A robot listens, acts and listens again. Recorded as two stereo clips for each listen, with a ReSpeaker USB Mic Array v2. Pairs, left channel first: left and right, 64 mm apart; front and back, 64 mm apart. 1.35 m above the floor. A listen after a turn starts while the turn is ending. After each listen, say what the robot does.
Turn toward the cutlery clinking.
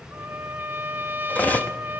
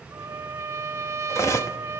Turn 30° left.
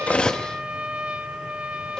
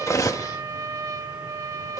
Keep listening.
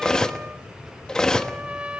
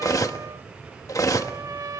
Turn 15° left.
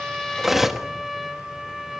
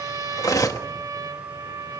Facing the cutlery clinking, 1 to 2 m away.